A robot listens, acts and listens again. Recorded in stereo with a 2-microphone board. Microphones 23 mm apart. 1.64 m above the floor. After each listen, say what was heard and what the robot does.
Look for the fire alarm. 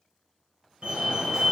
The fire alarm: about 45° right or 135° right. Turn 45° right.
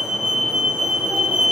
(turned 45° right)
So it is at 85° right. Turn 85° right.
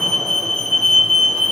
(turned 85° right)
The fire alarm is now 20° left. Turn 20° left.
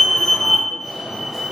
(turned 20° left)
Found it: a fire alarm, straight ahead, 1 to 2 m away.